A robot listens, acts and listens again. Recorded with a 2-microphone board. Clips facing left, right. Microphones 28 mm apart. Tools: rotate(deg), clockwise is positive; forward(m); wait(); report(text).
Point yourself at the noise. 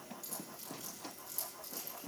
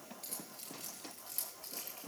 rotate(35)
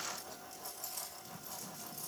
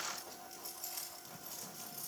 report("Found it: keys jangling, straight ahead, over 4 m away.")